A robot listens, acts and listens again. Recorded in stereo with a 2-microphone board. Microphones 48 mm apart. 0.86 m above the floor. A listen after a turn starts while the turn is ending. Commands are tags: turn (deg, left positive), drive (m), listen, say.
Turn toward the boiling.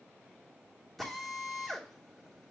<listen/>
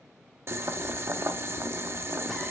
<turn deg="-60"/>
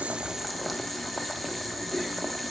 <say>Facing the boiling, under 1 m away.</say>